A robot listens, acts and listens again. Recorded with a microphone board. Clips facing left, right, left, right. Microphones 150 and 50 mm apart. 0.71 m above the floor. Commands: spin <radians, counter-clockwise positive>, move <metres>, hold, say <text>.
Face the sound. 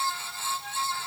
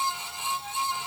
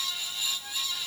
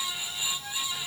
hold
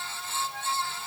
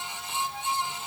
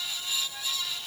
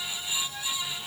hold
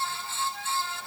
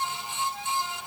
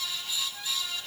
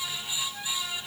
say I can't make out anything.